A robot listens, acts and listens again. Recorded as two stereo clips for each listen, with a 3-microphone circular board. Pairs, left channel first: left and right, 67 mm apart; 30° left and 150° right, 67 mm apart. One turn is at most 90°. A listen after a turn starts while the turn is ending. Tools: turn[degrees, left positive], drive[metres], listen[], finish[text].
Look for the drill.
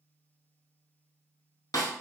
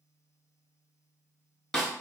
Action: listen[]
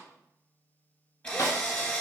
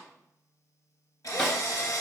Thought: The drill: 20° left.
Action: turn[20]
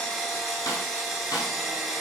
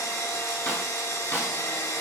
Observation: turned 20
Action: finish[Facing the drill, under 1 m away.]